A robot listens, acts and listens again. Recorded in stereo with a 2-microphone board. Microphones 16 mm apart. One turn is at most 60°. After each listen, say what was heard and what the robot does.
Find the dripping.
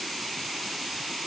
Keep listening.
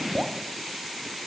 The dripping: about 35° right or 145° right. Turn 35° right.
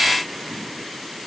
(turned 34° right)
Keep listening.
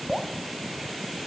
Found it: dripping, straight ahead.